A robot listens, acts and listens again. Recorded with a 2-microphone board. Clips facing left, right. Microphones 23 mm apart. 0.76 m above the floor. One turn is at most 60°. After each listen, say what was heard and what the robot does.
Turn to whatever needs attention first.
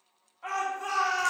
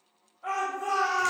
The shout: about 55° left or 125° left. Turn 55° left.
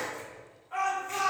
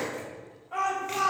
So it is at 10° left. Turn 10° left.
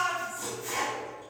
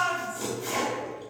Facing the shout.